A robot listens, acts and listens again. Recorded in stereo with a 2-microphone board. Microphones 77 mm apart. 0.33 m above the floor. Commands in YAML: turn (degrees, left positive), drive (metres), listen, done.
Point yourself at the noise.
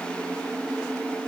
listen: true
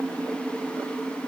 listen: true
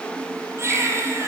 turn: -35
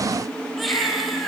done: "Found it: a baby crying, straight ahead, 2 to 4 m away."